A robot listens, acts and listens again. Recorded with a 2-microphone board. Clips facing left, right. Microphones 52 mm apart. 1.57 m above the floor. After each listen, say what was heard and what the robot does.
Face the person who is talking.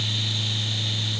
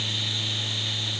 Keep listening.
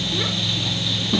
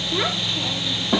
The child speaking: about 60° right or 120° right. Turn 60° right.
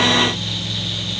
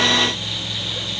Keep listening.
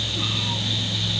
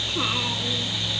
Keep listening.
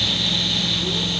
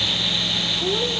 I heard a child speaking, but can't make it out now. It was about straight ahead or 60° right.